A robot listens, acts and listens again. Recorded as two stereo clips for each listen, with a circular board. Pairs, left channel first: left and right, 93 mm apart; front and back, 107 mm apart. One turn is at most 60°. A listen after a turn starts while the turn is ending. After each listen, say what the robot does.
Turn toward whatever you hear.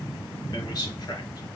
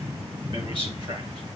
Turn 60° left.
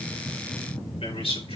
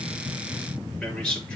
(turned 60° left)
Turn 60° left.
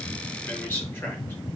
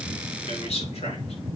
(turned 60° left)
Turn 20° left.
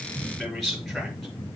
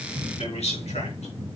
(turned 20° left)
Found it: a man speaking, straight ahead.